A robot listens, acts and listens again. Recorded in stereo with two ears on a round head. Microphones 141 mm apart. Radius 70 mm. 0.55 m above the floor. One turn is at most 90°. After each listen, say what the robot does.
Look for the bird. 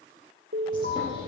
Turn 30° left.
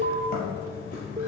Turn 90° left.
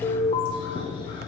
Turn 30° left.
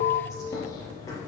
Turn 20° left.
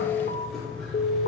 Found it: a bird, straight ahead, 2 to 4 m away.